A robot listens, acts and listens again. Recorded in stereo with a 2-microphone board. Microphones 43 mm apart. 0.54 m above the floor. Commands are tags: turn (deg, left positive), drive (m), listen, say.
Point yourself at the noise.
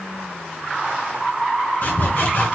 <turn deg="55"/>
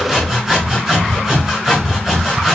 <say>Found it: sawing, straight ahead, 2 to 4 m away.</say>